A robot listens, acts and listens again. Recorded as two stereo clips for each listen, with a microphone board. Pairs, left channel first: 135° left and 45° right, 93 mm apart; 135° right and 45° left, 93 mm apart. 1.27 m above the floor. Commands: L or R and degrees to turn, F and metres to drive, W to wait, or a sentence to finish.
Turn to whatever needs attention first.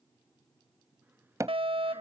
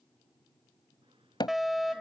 R40
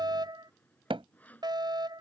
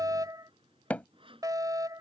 Facing the fire alarm.